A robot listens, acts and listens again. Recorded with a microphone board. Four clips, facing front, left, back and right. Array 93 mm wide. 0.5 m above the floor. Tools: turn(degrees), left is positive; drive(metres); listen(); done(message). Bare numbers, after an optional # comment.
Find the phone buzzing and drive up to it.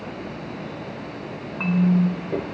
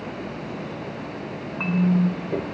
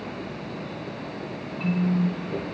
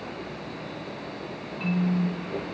drive(1.0)
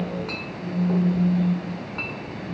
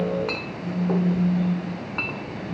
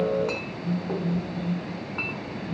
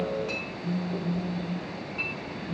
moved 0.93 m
drive(1.0)
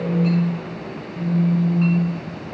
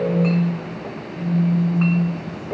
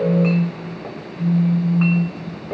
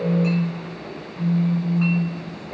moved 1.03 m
drive(1.0)
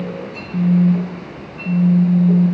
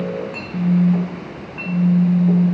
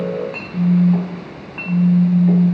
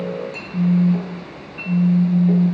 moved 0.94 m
# The phone buzzing is now 15° right.
turn(-15)
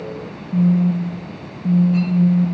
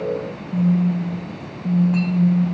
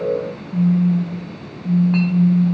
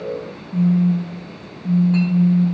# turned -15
drive(1.0)
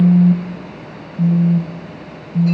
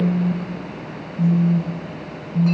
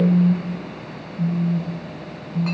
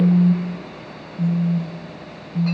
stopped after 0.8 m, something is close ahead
# The phone buzzing is now 10° right.
turn(-10)
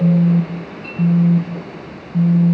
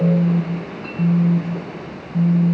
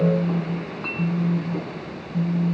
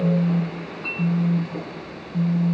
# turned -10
done("I am next to the phone buzzing.")